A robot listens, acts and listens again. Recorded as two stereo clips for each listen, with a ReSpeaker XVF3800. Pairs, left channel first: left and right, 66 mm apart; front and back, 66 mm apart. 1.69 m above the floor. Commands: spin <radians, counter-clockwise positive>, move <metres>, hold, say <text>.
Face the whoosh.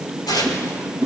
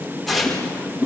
spin 2.01
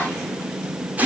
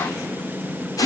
hold
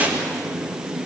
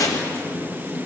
hold
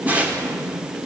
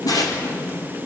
say I heard a whoosh from this way, but can't make it out now.